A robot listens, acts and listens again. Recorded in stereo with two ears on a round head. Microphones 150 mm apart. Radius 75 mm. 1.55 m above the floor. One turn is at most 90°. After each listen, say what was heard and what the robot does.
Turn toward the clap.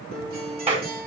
The clap: about 35° right or 145° right. Turn 35° right.
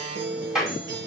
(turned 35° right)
Facing the clap, over 4 m away.